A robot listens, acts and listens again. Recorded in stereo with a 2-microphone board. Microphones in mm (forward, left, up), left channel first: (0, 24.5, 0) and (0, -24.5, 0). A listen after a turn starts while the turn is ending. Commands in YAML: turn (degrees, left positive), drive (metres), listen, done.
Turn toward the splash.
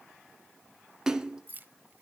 turn: -30
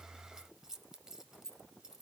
listen: true
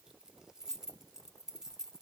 done: "I heard a splash, but can't make it out now. It was about 20° left or 140° right."